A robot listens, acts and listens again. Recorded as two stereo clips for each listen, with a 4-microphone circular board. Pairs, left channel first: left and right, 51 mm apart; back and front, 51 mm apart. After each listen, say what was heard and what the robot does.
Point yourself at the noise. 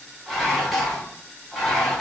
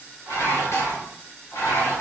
The dishes clattering: 175° left. Turn 175° left.
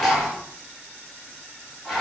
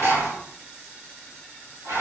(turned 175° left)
Facing the dishes clattering, 1 to 2 m away.